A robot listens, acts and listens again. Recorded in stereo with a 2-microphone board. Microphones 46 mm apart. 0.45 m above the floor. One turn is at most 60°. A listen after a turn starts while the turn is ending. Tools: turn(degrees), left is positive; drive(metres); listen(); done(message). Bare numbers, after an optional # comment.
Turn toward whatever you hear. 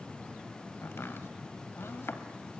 # The chopping: about 60° left or 120° left.
turn(60)
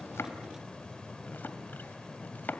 # So it is at 50° left.
turn(50)
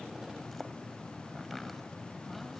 done("Facing the chopping.")